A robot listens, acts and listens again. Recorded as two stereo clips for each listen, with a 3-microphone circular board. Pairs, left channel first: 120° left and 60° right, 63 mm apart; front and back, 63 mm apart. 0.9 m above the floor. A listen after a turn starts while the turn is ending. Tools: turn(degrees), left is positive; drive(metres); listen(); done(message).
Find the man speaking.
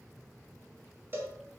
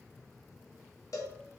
listen()
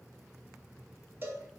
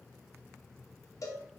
listen()
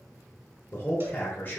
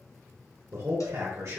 turn(degrees=175)
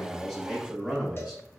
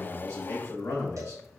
turn(degrees=30)
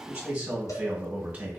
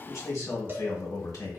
done("Facing the man speaking, 1 to 2 m away.")